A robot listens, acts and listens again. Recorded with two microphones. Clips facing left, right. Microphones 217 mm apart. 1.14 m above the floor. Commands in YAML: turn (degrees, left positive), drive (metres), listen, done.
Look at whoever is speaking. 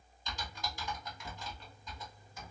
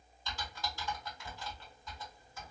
listen: true
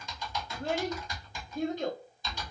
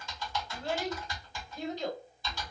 turn: 50
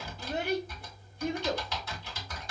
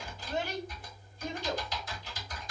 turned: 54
turn: 70
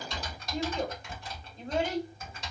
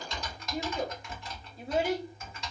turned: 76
done: "Facing the child speaking, 1 to 2 m away."